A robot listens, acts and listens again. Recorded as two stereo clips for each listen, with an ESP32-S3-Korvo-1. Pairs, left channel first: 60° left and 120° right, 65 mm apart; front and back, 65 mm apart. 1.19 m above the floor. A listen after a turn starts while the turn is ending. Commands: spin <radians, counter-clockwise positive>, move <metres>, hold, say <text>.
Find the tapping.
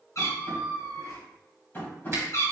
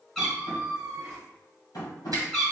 say Facing the tapping.